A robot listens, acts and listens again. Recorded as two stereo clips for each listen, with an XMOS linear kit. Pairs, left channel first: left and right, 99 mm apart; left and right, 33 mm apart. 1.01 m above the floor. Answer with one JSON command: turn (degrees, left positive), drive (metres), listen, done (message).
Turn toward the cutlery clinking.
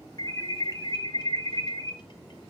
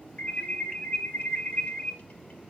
{"listen": true}
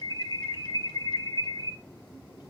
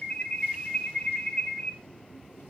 {"listen": true}
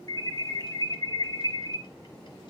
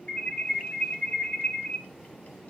{"done": "I can't make out cutlery clinking to turn to."}